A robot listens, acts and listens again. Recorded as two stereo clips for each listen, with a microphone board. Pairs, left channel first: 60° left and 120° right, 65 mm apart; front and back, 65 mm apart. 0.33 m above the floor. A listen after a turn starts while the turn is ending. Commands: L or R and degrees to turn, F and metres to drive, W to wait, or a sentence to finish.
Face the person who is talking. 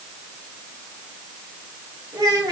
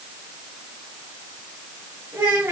R125
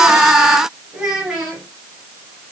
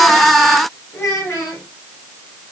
R40
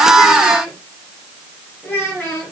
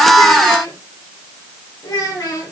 Found it: a child speaking, straight ahead, 1 to 2 m away.